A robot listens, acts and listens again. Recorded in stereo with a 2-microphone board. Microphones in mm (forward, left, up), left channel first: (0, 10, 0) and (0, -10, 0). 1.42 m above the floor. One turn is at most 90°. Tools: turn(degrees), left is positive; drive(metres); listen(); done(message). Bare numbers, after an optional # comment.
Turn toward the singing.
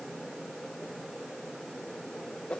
listen()
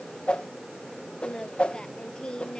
# The singing: about 40° left or 140° left.
turn(40)
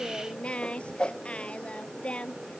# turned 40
# So it is at 100° left.
turn(90)
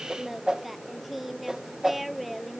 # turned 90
done("Found it: singing, straight ahead.")